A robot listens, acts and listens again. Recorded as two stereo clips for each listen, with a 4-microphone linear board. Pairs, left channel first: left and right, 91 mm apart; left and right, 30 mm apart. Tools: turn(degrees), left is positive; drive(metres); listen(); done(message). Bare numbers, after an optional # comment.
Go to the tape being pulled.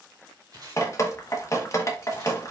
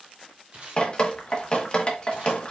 # The tape being pulled: about 45° right or 135° right.
turn(-45)
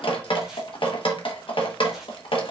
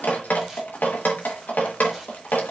listen()
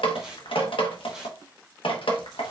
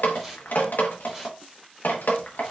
# So it is at 10° right.
turn(-10)
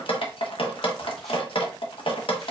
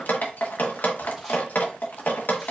listen()
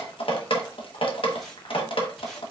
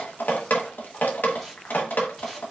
listen()
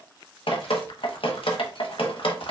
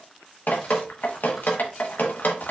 done("Facing where the tape being pulled came from. I can't hear it now. I did not reach it.")